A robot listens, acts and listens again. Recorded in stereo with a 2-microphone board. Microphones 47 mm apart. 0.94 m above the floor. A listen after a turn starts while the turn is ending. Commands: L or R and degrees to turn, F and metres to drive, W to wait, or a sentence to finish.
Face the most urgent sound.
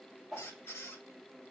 W
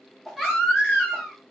L30
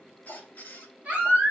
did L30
R25
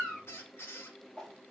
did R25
W
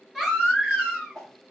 Found it: a baby crying, straight ahead, 2 to 4 m away.